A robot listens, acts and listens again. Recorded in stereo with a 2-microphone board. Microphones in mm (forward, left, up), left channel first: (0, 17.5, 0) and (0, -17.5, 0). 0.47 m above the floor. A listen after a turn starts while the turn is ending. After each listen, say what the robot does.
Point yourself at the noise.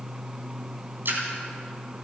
Turn 70° right.
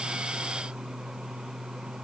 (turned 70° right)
Keep listening.
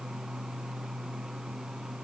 I heard a splash, but can't make it out now. It was about straight ahead or 40° right.